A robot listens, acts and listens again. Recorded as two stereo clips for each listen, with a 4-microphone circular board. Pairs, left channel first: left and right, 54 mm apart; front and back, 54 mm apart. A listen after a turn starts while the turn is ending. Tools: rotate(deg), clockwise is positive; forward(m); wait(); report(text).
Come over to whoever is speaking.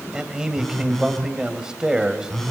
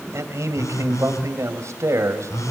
rotate(165)
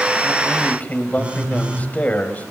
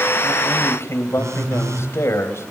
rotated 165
rotate(-30)
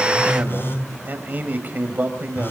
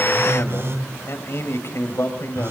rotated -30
rotate(35)
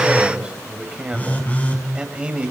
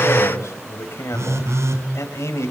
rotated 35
rotate(20)
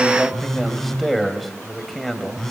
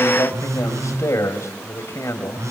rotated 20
forward(1.0)
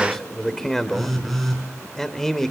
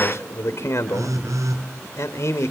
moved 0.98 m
rotate(-10)
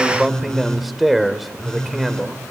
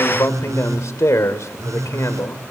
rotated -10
forward(1.0)
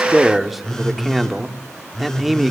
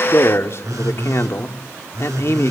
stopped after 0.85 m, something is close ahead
report("Arrived at the man speaking, straight ahead.")